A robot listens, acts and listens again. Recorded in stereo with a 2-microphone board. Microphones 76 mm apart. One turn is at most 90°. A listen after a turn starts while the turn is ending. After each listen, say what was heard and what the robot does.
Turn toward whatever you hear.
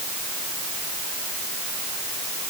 Keep listening.
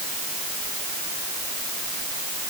Keep listening.
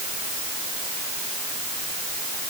I can't make out anything to turn to.